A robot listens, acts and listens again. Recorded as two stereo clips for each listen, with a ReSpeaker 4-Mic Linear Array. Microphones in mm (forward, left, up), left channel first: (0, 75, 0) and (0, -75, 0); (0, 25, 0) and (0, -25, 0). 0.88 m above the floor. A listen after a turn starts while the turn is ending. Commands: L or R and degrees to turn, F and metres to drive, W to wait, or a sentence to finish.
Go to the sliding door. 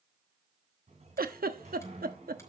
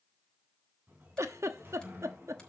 R45
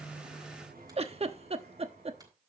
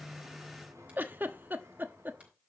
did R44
R90
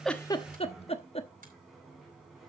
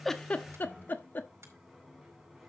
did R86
F1.0
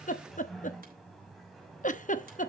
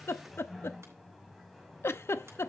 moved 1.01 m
F1.0
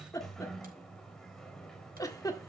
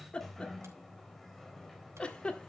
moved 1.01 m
F1.0
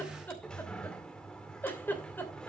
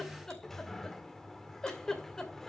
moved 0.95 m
F1.0
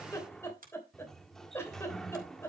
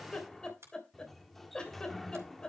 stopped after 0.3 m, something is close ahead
I am next to the sliding door.